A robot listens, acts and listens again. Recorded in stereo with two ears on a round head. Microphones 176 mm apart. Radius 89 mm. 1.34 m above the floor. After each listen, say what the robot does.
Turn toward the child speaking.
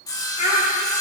Turn 40° left.
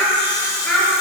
Turn 10° left.
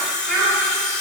Found it: a child speaking, straight ahead.